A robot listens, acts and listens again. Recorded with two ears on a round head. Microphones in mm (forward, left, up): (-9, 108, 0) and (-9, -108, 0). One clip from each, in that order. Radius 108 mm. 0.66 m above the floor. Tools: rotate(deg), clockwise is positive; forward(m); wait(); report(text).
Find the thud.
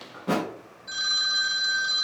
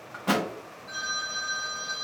rotate(65)
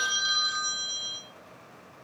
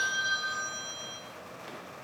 wait()
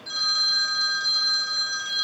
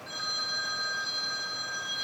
report("I heard a thud, but can't make it out now. It was about straight ahead or 50° right.")